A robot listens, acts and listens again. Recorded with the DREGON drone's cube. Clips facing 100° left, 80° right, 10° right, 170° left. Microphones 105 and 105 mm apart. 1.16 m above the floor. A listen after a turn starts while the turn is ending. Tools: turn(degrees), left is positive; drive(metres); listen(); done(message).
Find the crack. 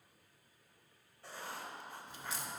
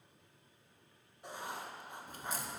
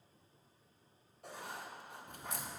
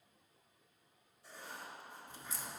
turn(degrees=-40)
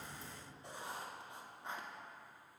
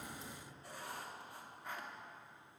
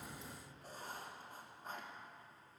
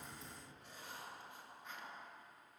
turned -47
turn(degrees=10)
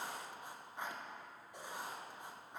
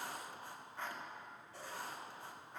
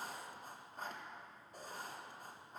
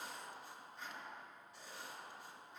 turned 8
done("I heard a crack from this way, but can't make it out now.")